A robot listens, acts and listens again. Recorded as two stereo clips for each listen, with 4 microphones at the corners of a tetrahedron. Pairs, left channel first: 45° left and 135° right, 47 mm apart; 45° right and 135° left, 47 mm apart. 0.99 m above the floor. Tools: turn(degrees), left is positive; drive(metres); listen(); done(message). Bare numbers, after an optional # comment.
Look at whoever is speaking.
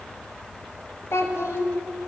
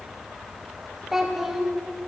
# The child speaking: 50° left.
turn(50)
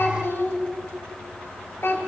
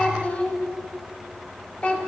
# The child speaking is now 15° left.
turn(15)
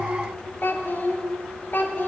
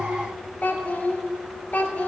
done("Found it: a child speaking, straight ahead, 1 to 2 m away.")